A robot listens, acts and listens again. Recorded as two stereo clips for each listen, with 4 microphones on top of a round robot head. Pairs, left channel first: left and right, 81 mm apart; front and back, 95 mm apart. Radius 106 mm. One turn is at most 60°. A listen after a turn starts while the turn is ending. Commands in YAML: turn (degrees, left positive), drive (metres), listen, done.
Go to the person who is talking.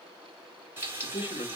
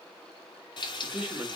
turn: 60
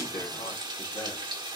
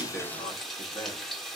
turn: 45
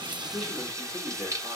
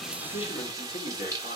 drive: 1.0
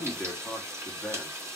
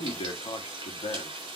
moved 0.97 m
drive: 1.0
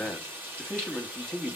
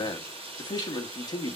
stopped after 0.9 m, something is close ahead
turn: 10
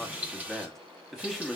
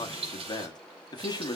done: "Arrived at the man speaking, straight ahead."